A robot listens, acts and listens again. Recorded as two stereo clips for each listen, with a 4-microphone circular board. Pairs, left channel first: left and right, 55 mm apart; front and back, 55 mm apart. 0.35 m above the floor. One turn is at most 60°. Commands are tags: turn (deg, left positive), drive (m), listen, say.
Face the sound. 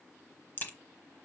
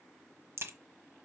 <turn deg="60"/>
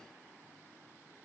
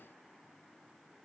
<turn deg="60"/>
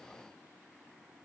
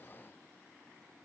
<turn deg="25"/>
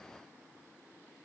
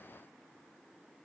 <say>Facing where the crack came from. I can't hear it now.</say>